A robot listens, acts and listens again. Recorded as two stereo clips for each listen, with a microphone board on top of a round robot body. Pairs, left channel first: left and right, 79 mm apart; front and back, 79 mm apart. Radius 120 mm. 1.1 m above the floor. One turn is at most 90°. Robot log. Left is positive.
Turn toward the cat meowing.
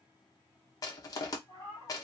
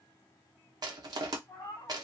note: The cat meowing: 55° left.
cmd yaw +55
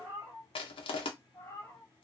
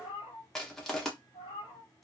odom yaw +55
note: The cat meowing is now 30° left.
cmd yaw +30
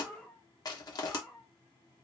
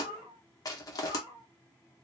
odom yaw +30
note: The cat meowing is now 30° left.
cmd yaw +30
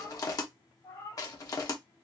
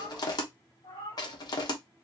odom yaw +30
note: The cat meowing is now 35° left.
cmd yaw +35
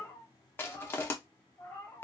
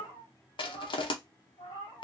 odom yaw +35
note: The cat meowing is now 20° left.
cmd yaw +20
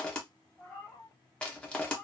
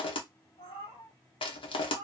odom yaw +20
end: Found it: a cat meowing, straight ahead.